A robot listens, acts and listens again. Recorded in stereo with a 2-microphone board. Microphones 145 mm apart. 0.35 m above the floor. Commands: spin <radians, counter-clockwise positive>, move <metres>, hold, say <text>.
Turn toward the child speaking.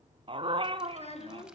spin 0.79
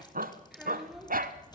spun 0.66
say Facing the child speaking, 2 to 4 m away.